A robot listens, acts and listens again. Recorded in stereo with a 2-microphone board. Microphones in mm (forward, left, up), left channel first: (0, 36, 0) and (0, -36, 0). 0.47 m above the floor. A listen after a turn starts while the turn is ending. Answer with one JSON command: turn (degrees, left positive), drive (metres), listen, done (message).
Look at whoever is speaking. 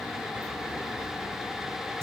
{"listen": true}
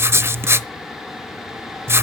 {"listen": true}
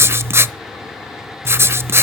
{"done": "I can't make out anyone speaking to turn to."}